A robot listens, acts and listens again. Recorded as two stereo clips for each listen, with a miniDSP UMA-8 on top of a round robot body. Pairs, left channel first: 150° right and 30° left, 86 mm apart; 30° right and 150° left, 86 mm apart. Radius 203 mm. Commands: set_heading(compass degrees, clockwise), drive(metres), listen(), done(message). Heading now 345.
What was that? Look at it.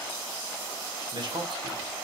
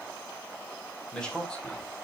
set_heading(295)
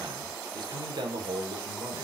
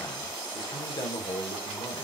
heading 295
done("Facing the man speaking.")